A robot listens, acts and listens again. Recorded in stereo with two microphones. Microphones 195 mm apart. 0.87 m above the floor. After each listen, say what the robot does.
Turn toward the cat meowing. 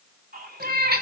Turn 55° right.
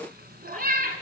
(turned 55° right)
Turn 45° right.
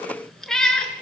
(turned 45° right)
Found it: a cat meowing, straight ahead, 2 to 4 m away.